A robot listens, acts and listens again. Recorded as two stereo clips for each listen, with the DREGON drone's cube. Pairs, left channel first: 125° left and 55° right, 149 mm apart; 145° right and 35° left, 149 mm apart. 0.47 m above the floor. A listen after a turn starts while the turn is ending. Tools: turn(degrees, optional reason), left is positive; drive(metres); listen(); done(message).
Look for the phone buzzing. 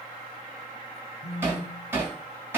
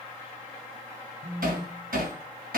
turn(degrees=-130, reason="The phone buzzing: 130° right.")
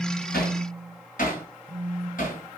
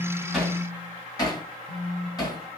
done("Found it: a phone buzzing, straight ahead, under 1 m away.")